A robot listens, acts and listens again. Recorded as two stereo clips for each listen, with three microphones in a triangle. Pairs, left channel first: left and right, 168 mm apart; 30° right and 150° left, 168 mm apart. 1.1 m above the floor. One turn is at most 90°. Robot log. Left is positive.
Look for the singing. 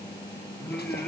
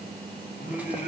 note: The singing: 10° left.
cmd yaw +10
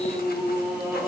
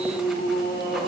note: The singing is now 15° right.
cmd yaw -15
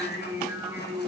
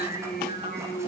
note: The singing is now 20° right.
cmd yaw -20
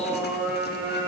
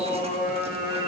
note: The singing is now 15° right.
cmd yaw -15
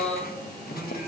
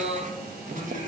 note: The singing is now 10° right.
cmd yaw -10
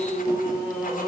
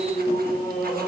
end: Facing the singing, 2 to 4 m away.